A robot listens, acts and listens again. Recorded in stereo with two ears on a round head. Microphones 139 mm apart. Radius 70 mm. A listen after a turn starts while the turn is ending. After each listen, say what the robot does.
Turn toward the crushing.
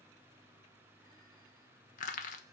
Turn 50° left.
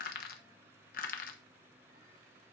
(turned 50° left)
Turn 70° left.
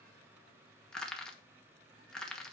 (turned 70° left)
Found it: crushing, straight ahead.